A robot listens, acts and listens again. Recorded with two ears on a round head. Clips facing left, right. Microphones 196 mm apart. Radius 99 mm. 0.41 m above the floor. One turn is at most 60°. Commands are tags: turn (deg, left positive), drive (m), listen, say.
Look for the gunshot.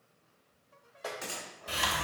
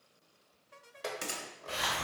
<turn deg="-40"/>
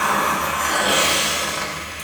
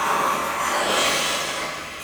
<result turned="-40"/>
<listen/>
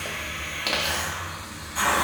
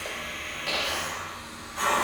<say>I heard a gunshot, but can't make it out now. It was about straight ahead or 100° right.</say>